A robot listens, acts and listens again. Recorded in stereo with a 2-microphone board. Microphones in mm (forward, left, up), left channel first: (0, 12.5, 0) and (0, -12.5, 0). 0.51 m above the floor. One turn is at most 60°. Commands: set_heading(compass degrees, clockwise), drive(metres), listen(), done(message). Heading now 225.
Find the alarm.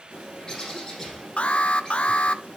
set_heading(175)
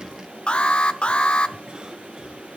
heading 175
set_heading(115)
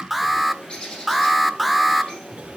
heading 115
done("Facing the alarm, under 1 m away.")